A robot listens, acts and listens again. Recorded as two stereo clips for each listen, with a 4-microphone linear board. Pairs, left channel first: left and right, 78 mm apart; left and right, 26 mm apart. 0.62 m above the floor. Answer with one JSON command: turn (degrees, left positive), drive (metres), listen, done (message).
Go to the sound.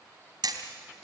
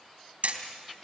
{"turn": -60}
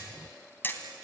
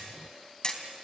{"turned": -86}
{"turn": 25}
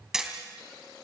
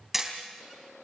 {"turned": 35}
{"turn": -10}
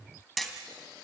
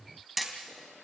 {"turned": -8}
{"drive": 1.0}
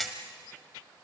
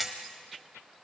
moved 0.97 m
{"drive": 1.0}
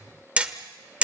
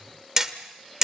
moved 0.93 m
{"turn": -20}
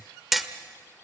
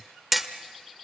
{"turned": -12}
{"drive": 1.0}
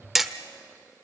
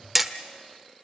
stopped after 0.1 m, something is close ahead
{"done": "I am next to the hammering."}